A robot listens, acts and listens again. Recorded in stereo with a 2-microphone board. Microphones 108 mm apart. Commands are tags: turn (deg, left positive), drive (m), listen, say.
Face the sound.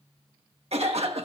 <turn deg="-70"/>
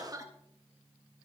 <turn deg="-35"/>
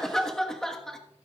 <say>Facing the cough, 1 to 2 m away.</say>